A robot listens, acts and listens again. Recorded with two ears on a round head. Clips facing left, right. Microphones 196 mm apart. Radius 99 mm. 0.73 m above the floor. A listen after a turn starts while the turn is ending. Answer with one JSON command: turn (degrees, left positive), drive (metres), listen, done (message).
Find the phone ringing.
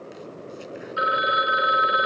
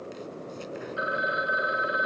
{"turn": 75}
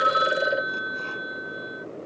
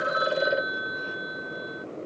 {"done": "Facing the phone ringing."}